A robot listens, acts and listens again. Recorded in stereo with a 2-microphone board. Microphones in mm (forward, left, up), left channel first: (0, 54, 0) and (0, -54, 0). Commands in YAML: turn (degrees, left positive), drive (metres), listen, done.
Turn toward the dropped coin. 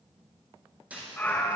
turn: -30
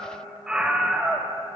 listen: true
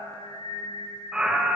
done: "I heard a dropped coin, but can't make it out now. It was about 15° left or 135° right."